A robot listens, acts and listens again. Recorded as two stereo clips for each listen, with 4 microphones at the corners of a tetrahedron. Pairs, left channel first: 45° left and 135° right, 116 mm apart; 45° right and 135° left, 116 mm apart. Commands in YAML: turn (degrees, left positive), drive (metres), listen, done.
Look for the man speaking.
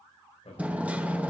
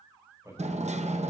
turn: 75
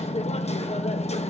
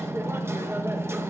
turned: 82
turn: -10
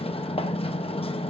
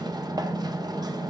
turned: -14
listen: true
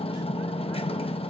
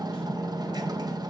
done: "I heard a man speaking from this way, but can't make it out now."